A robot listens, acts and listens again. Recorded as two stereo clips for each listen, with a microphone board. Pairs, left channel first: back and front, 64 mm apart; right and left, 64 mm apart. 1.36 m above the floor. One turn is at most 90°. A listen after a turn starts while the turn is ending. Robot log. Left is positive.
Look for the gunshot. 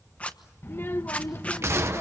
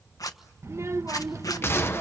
note: The gunshot: 40° right.
cmd yaw -40
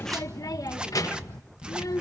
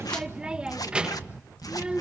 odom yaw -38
end: Facing where the gunshot came from. I can't hear it now.